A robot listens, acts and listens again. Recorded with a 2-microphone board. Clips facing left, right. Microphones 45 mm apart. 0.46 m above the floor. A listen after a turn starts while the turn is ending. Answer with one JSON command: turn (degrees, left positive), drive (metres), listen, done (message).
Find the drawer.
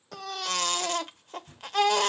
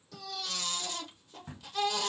{"turn": -45}
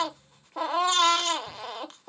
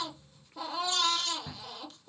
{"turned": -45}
{"listen": true}
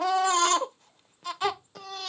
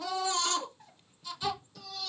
{"listen": true}
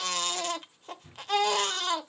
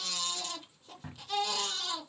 {"turn": -90}
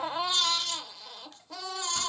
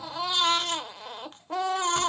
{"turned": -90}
{"listen": true}
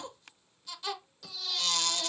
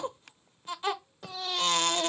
{"listen": true}
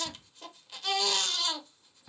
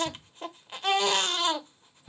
{"turn": 15}
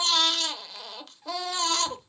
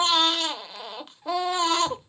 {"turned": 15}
{"done": "Found it: a drawer, straight ahead, 1 to 2 m away."}